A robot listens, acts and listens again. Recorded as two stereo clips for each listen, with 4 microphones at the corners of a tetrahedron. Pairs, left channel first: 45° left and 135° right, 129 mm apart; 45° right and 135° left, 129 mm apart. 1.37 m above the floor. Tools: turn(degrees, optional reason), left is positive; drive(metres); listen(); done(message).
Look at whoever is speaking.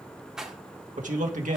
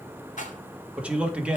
turn(degrees=-145, reason="The man speaking: 145° right.")
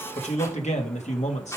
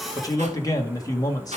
turn(degrees=15, reason="The man speaking is now 15° left.")
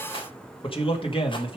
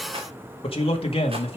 done("Found it: a man speaking, straight ahead.")